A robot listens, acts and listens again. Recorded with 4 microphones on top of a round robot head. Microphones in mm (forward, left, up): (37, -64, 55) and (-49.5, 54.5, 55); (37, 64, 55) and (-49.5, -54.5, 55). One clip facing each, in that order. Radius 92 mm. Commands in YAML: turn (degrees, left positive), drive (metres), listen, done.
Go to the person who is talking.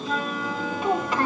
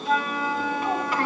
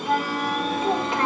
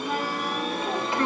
turn: 15
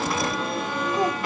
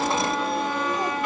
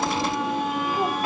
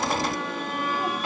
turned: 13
listen: true
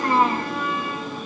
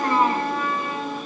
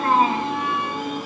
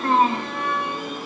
drive: 1.0
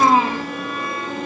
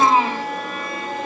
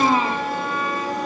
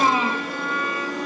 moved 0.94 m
drive: 1.0
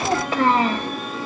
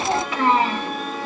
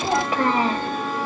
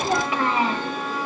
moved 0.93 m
drive: 1.0
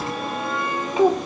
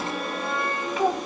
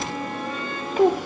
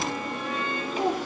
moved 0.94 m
turn: 10
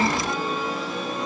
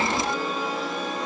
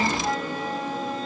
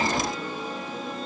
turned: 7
listen: true
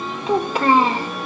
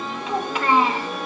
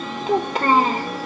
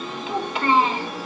drive: 1.0
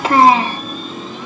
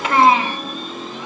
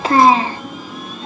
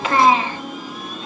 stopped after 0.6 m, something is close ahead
done: "Arrived at the child speaking, straight ahead."